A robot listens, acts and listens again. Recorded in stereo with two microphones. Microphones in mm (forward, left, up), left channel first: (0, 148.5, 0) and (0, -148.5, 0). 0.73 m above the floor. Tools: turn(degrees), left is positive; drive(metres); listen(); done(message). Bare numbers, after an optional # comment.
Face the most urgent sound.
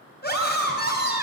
# The scream: about 35° left or 145° left.
turn(35)
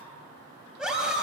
done("Facing the scream.")